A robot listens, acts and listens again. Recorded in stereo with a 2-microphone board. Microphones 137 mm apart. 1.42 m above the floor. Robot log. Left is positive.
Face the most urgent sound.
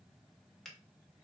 cmd idle
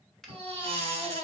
note: The baby crying: about 45° right or 135° right.
cmd yaw -45
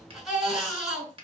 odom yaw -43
end: Found it: a baby crying, straight ahead.